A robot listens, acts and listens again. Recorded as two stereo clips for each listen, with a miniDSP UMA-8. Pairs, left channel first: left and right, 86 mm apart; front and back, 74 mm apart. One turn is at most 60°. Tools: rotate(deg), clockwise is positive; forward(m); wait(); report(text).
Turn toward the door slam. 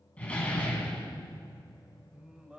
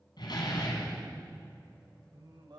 rotate(-15)
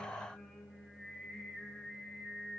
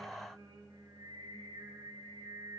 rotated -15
report("Facing where the door slam came from. I can't hear it now.")